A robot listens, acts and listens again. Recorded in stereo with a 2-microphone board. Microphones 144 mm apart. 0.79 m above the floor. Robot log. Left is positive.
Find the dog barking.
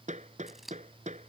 cmd idle
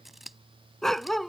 cmd yaw +30
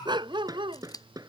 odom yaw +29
note: So it is at 35° right.
cmd yaw -35
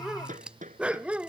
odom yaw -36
note: The dog barking is now 10° right.
cmd yaw -10
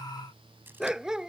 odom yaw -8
end: Found it: a dog barking, straight ahead.